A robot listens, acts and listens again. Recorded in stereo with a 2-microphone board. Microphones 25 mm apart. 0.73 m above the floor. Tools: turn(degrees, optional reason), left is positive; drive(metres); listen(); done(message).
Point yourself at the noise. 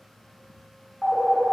turn(degrees=45, reason="The phone ringing: about 45° left or 135° left.")
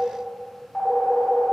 turn(degrees=90, reason="So it is at 90° left.")
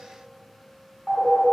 turn(degrees=10, reason="The phone ringing is now 10° left.")
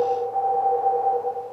done("Facing the phone ringing.")